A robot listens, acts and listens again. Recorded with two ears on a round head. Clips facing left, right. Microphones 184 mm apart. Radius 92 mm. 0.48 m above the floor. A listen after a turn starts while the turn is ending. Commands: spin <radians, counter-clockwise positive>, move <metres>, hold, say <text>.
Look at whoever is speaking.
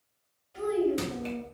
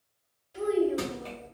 spin -0.35
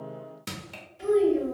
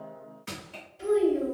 say Found it: a child speaking, straight ahead, 1 to 2 m away.